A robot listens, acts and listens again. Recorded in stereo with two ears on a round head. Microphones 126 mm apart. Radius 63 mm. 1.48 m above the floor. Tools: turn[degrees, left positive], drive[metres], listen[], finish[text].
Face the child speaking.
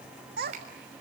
Action: turn[-90]
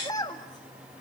Thought: So it is at 30° left.
Action: turn[30]
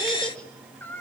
Thought: The child speaking is now 15° left.
Action: turn[15]
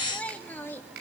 Thought: The child speaking is now 15° left.
Action: turn[15]
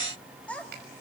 Thought: The child speaking is now 10° left.
Action: turn[10]
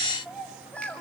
Thought: The child speaking is now 10° left.
Action: turn[10]
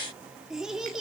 Action: finish[Found it: a child speaking, straight ahead, 2 to 4 m away.]